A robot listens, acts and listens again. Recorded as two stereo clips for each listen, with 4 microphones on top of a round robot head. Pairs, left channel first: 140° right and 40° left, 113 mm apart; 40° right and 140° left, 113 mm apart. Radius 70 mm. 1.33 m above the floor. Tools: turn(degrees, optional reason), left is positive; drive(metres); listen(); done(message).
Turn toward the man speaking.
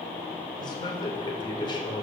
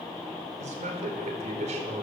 turn(degrees=170, reason="The man speaking: 170° left.")
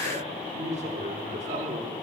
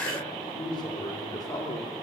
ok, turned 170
turn(degrees=20, reason="The man speaking is now 20° left.")
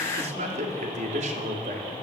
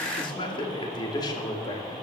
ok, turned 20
turn(degrees=15, reason="The man speaking is now 15° left.")
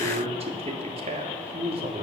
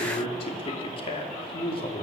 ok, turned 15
done("Found it: a man speaking, straight ahead.")